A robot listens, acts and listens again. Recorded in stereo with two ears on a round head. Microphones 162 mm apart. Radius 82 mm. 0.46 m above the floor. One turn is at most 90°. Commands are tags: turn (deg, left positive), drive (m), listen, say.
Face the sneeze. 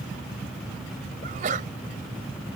<turn deg="-45"/>
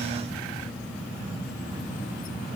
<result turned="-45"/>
<listen/>
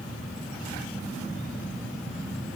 <say>I heard a sneeze, but can't make it out now. It was about straight ahead or 90° right.</say>